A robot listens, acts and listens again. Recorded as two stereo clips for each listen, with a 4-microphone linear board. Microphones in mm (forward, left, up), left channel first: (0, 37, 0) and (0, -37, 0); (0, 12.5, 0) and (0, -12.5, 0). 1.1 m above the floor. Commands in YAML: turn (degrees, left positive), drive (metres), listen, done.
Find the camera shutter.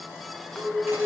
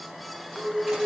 listen: true
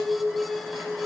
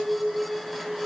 listen: true
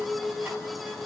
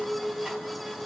done: "I can't make out a camera shutter to turn to."